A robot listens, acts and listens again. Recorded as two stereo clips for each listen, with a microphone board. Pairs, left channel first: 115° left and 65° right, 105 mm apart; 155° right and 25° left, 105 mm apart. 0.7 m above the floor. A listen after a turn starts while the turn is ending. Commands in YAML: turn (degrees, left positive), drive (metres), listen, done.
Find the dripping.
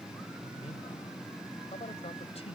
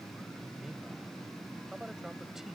listen: true
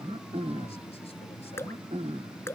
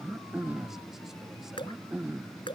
turn: 175
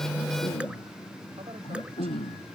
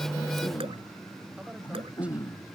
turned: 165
turn: 10
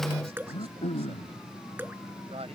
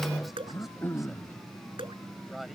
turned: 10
done: "Facing the dripping."